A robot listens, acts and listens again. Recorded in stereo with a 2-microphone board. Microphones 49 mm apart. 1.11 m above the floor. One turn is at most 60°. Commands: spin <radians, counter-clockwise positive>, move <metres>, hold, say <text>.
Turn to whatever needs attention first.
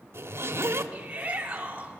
spin -0.44
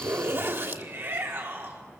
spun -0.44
spin -1.05
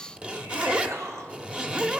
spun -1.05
spin -1.05
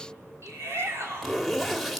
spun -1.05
spin -1.05
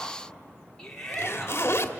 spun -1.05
spin 0.17
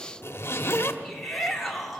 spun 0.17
say Found it: a shout, straight ahead.